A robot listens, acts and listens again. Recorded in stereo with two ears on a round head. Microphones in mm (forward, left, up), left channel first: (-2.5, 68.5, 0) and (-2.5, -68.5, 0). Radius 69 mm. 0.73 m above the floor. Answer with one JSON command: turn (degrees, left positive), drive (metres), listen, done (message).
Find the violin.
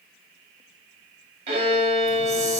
{"turn": -55}
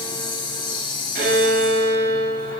{"turn": -75}
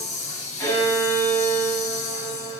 {"turn": 25}
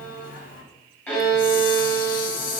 {"turn": 15}
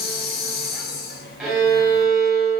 {"done": "Found it: a violin, straight ahead."}